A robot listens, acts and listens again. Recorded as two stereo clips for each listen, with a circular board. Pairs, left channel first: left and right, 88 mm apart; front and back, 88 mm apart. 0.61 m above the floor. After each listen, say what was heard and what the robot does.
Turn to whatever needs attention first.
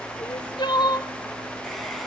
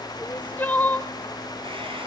The crying: 65° left. Turn 65° left.
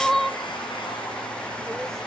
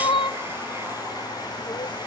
Found it: crying, straight ahead.